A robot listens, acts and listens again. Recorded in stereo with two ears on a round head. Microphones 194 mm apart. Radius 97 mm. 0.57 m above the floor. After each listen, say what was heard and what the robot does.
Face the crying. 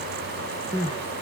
The crying: about 20° right or 160° right. Turn 20° right.
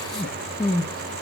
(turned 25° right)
Found it: crying, straight ahead.